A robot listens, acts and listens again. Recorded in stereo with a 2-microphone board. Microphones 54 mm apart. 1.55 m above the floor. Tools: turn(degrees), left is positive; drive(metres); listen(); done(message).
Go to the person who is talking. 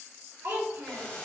turn(degrees=-70)
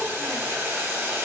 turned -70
listen()
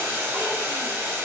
listen()
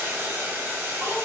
done("I heard a child speaking, but can't make it out now. It was about straight ahead or 40° right. I did not reach it.")